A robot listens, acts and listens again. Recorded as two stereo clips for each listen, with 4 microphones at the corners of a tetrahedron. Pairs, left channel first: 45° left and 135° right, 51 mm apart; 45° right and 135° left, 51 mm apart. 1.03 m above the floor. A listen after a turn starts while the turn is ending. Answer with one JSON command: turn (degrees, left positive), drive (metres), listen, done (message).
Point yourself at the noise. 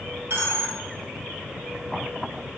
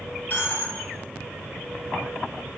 {"turn": -105}
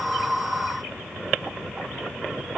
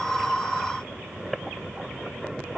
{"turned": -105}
{"done": "Facing where the dropped coin came from. I can't hear it now."}